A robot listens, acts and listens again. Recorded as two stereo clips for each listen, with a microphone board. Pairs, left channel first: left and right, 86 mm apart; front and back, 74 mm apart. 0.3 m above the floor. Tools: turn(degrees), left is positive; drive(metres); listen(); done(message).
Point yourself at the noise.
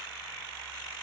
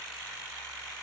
listen()
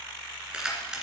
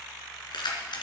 turn(degrees=-10)
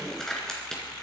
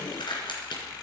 done("Found it: keys jangling, straight ahead.")